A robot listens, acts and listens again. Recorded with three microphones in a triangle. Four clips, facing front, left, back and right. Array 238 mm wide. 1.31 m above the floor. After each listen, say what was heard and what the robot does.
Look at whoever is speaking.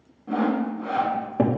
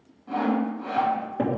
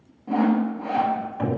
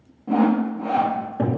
Keep listening.
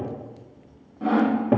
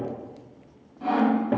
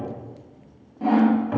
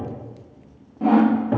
Keep listening.
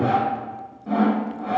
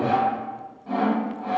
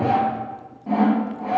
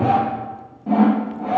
I can't make out anyone speaking to turn to.